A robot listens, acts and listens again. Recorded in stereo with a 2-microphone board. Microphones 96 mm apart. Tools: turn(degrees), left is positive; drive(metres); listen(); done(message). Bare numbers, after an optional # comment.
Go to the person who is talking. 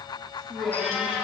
# The man speaking: about 70° right or 110° right.
turn(-70)
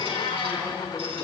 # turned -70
drive(1.0)
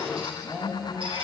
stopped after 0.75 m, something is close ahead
done("Something is in my way. I am facing the man speaking but have not reached it.")